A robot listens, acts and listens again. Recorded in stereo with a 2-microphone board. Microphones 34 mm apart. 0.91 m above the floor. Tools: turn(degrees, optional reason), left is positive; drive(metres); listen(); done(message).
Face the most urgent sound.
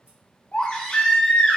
turn(degrees=30, reason="The baby crying: about 30° left or 150° left.")
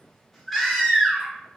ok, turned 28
done("Facing the baby crying, under 1 m away.")